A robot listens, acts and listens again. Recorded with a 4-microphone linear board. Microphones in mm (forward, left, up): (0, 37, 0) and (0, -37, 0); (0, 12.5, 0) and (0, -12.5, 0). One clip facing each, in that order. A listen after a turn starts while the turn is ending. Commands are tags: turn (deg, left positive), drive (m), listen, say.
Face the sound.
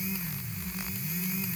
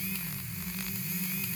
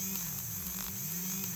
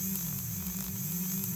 <listen/>
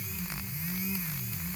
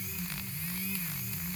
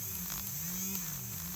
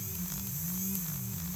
<listen/>
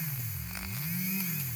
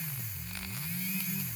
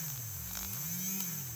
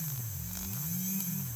<say>I can't make out anything.</say>